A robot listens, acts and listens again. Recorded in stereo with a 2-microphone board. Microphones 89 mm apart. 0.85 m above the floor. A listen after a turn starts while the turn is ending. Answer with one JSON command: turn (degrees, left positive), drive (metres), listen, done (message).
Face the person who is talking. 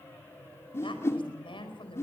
{"turn": 90}
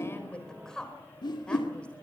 {"turn": 10}
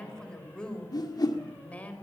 {"turn": 20}
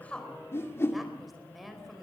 {"done": "Found it: a woman speaking, straight ahead, over 4 m away."}